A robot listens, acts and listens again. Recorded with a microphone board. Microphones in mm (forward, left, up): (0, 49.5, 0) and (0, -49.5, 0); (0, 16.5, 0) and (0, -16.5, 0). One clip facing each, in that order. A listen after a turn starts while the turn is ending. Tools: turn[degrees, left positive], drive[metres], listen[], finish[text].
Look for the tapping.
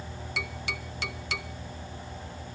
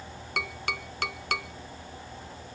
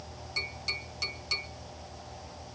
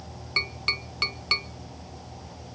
Thought: The tapping: about 55° right or 125° right.
Action: turn[-55]
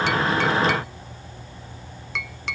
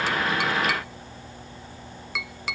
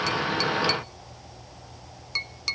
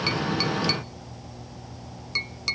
Action: finish[Facing the tapping, under 1 m away.]